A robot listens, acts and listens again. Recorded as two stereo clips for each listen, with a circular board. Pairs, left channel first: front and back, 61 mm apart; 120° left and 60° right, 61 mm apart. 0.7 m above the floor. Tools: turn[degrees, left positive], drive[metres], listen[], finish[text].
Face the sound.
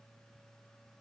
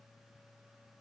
Action: listen[]
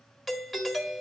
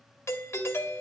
Thought: The doorbell: 90° left.
Action: turn[90]
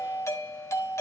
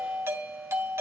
Thought: The doorbell is now 20° right.
Action: turn[-20]
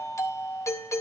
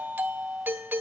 Action: finish[Found it: a doorbell, straight ahead, 1 to 2 m away.]